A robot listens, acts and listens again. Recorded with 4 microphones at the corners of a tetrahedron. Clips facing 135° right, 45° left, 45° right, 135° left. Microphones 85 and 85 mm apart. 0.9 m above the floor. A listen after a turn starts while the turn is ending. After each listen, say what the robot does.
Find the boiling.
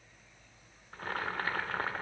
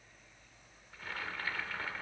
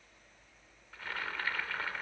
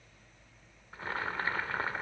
Turn 170° right.
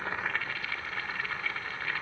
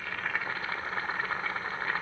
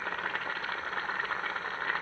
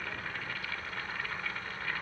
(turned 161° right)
Facing the boiling, under 1 m away.